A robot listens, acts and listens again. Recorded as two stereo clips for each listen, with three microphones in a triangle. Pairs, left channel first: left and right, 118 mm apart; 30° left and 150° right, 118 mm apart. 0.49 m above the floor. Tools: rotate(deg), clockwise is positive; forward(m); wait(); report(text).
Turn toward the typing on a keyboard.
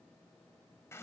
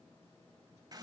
wait()
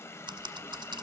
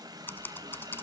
rotate(40)
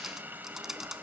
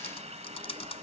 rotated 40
report("Facing the typing on a keyboard, 1 to 2 m away.")